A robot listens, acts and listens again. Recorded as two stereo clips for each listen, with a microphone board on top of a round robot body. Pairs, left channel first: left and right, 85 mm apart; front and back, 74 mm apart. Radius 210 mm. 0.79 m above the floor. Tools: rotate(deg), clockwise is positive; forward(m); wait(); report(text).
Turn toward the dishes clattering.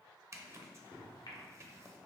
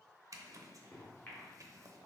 wait()
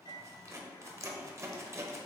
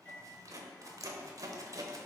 wait()
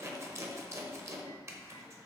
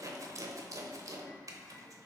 report("I can't make out dishes clattering to turn to.")